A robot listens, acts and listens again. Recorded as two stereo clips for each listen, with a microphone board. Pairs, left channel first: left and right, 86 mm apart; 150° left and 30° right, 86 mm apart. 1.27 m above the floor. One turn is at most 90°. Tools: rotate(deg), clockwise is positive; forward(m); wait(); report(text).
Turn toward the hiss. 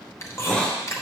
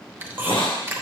rotate(-90)
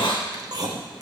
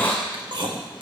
rotate(-80)
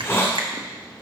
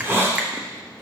rotate(-30)
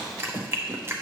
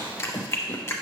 wait()
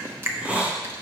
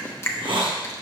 rotate(15)
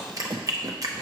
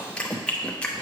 wait()
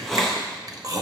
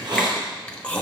report("Found it: a hiss, straight ahead.")